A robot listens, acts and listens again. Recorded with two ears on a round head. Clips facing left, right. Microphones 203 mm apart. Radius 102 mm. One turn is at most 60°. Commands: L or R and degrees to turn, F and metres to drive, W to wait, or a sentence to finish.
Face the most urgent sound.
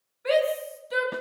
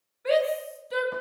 L30
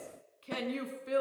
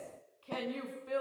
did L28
L60
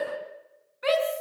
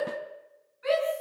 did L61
L60
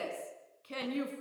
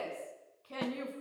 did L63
L30
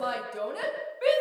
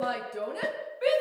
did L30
Found it: a shout, straight ahead.